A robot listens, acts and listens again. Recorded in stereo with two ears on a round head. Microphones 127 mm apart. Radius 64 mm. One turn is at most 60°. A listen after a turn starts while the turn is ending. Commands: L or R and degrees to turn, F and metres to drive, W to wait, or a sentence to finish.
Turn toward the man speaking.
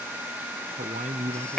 R50
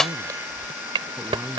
R15
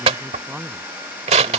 Found it: a man speaking, straight ahead.